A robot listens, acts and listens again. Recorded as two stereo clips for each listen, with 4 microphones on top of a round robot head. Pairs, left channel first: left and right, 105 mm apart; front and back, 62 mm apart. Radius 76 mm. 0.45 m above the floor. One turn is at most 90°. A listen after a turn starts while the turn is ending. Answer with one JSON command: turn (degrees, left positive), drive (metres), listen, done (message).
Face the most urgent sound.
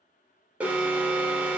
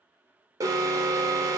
{"turn": -90}
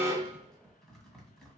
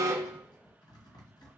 {"turn": -75}
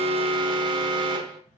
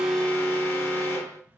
{"turn": -55}
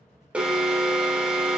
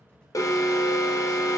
{"done": "Found it: an alarm, straight ahead, under 1 m away."}